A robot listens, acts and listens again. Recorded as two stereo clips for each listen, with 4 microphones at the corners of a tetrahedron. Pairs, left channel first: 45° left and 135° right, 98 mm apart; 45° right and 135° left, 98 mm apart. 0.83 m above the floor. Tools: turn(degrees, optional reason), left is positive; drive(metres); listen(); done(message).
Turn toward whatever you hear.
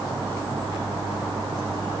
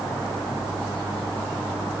listen()
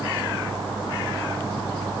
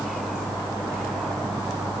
listen()
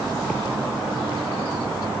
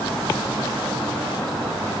done("I can't make out anything.")